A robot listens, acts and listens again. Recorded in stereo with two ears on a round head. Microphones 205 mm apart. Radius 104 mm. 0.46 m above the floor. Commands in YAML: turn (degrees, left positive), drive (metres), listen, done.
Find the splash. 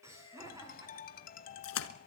turn: 65
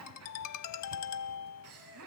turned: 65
listen: true
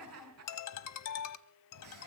done: "I heard a splash, but can't make it out now. It was about straight ahead or 50° left."